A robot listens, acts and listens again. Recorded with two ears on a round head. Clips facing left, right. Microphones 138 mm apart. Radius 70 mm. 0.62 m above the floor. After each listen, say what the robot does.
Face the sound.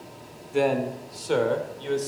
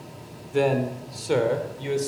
Turn 30° right.
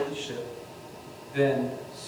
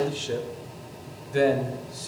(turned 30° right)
Turn 125° right.
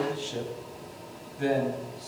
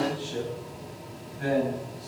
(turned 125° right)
Turn 30° left.
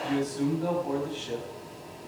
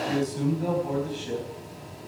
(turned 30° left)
Turn 10° right.
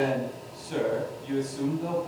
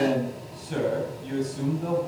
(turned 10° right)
Found it: a man speaking, straight ahead, 2 to 4 m away.